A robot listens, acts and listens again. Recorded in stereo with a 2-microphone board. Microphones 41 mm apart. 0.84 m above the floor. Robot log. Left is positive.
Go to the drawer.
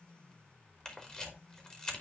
cmd idle
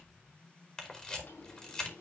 cmd yaw +90
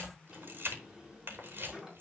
note: So it is at 10° right.
cmd yaw -10
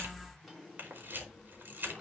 cmd fwd 1.0
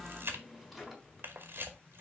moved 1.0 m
cmd fwd 1.0
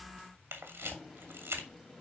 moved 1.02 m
note: The drawer is now 10° left.
cmd yaw +10
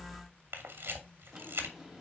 cmd fwd 1.0
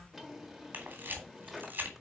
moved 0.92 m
cmd fwd 1.0
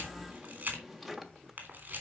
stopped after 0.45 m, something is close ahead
end: Arrived at the drawer, straight ahead.